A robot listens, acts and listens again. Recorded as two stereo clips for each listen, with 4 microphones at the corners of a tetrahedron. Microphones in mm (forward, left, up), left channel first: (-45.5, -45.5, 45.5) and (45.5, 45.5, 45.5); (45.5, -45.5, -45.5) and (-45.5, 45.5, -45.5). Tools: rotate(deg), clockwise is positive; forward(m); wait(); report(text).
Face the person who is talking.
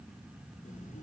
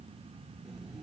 wait()
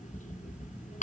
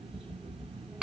wait()
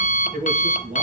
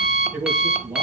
rotate(-65)
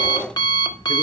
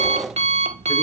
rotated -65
wait()
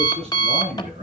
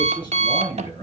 rotate(-10)
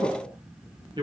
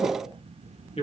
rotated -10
report("Found it: a man speaking, straight ahead.")